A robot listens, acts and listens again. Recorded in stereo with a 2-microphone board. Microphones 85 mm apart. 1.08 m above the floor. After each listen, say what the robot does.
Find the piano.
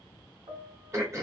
Turn 90° right.
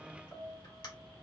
Found it: a piano, straight ahead.